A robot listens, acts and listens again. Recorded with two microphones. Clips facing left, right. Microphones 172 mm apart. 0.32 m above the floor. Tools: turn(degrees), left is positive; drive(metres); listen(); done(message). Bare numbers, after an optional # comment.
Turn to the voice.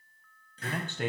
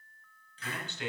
# The man speaking: about 55° left or 125° left.
turn(55)
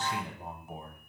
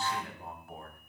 # So it is at 25° left.
turn(25)
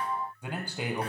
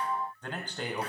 # The man speaking is now 10° left.
turn(10)
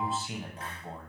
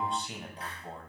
done("Facing the man speaking.")